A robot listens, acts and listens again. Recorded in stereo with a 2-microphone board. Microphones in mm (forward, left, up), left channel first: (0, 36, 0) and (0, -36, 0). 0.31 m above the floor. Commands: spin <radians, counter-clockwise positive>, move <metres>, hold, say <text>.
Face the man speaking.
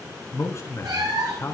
spin 0.70
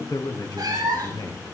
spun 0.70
spin 1.75
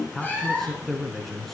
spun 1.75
say Facing the man speaking.